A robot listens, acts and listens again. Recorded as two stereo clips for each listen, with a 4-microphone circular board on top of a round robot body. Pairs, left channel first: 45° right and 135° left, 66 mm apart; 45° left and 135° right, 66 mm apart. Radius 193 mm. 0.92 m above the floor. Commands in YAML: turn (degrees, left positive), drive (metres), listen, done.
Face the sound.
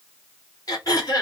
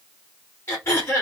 turn: -10
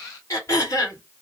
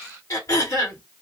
done: "Facing the throat clearing."